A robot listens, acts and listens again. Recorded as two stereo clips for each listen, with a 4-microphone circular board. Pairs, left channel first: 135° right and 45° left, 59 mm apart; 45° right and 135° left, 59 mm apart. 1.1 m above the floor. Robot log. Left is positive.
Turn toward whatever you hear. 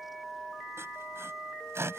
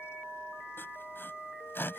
end: Facing the sawing.